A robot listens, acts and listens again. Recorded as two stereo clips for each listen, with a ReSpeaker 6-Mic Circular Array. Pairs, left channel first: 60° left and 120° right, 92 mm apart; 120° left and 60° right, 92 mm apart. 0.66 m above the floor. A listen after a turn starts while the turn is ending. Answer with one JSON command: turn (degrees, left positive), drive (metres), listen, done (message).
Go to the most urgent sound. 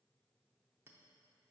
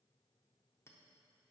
{"listen": true}
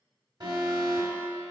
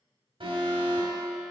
{"turn": -75}
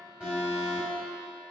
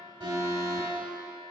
{"drive": 1.0}
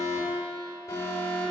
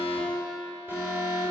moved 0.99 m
{"drive": 1.0}
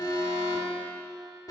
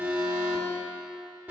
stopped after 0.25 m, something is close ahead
{"turn": 10}
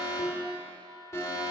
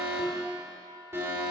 {"done": "I am next to the alarm."}